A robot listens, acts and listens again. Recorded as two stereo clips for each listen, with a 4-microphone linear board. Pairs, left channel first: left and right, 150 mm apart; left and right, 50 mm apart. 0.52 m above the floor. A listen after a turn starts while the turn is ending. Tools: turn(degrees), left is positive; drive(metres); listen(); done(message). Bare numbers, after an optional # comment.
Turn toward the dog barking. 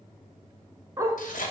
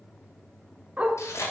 # The dog barking: about 20° right or 160° right.
turn(-20)
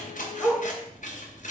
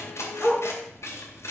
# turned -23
# So it is at 10° left.
turn(10)
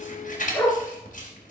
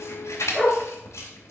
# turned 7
# The dog barking is now 10° left.
turn(10)
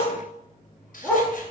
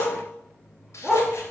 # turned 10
# The dog barking is now 10° left.
turn(10)
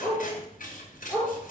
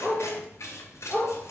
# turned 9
done("Found it: a dog barking, straight ahead.")